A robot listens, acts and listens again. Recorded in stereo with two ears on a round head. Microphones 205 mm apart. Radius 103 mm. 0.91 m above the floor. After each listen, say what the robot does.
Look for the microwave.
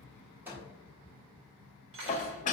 Turn 30° right.
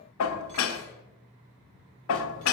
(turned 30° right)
Keep listening.
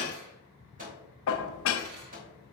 Turn 140° right.
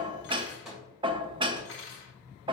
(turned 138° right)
Found it: a microwave, straight ahead, 2 to 4 m away.